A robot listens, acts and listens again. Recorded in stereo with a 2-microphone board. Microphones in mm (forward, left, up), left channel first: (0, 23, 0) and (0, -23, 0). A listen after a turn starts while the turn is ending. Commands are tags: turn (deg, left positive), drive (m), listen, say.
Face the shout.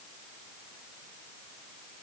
<listen/>
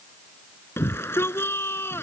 <turn deg="55"/>
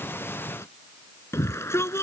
<turn deg="65"/>
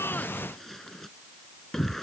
<say>Found it: a shout, straight ahead.</say>